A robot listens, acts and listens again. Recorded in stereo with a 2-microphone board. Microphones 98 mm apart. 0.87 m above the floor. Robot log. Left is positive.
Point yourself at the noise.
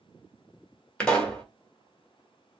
cmd yaw +30
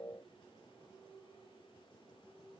cmd idle
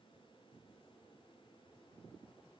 end: I heard a pop, but can't make it out now. It was about 20° right or 140° left.